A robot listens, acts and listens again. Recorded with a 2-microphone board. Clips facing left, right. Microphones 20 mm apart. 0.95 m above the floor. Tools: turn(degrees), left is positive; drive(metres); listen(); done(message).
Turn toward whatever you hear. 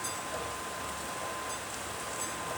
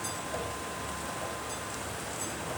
listen()
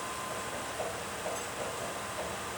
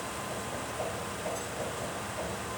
listen()
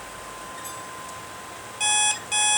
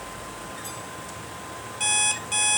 turn(degrees=30)
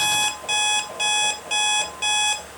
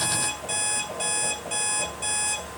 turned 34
turn(degrees=130)
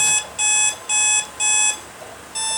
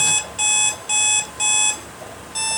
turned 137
done("Found it: an alarm clock, straight ahead, 1 to 2 m away.")